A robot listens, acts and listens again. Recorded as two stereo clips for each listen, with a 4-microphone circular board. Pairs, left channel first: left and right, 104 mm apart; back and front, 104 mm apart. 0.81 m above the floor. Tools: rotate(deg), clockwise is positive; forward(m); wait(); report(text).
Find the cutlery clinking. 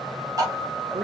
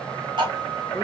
rotate(40)
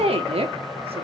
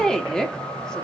wait()
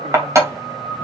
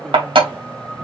rotate(30)
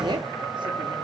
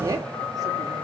wait()
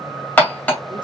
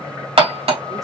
rotate(-15)
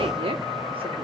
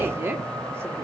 wait()
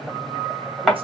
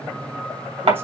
report("Facing the cutlery clinking.")